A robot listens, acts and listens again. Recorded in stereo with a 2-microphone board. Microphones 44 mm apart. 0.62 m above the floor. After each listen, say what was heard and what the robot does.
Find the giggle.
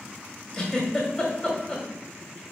Turn 30° left.
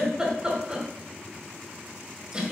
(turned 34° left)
So it is at 20° right. Turn 20° right.
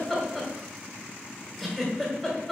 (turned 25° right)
Found it: a giggle, straight ahead.